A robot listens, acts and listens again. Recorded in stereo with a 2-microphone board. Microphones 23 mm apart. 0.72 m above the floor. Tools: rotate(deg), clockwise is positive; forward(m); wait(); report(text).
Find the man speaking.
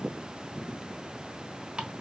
wait()
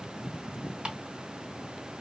wait()
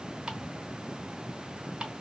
report("I can't make out a man speaking, only ticking.")